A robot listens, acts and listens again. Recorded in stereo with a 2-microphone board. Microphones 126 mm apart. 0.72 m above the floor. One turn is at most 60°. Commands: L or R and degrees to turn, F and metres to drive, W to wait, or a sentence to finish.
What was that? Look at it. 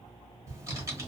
R25
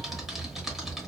Found it: typing on a keyboard, straight ahead, 1 to 2 m away.